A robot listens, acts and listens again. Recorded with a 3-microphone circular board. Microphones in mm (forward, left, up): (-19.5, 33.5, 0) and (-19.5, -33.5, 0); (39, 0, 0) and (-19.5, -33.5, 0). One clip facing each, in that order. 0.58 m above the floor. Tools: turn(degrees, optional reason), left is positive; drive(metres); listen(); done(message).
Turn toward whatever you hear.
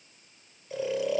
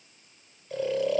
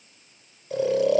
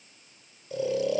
done("Found it: snoring, straight ahead, under 1 m away.")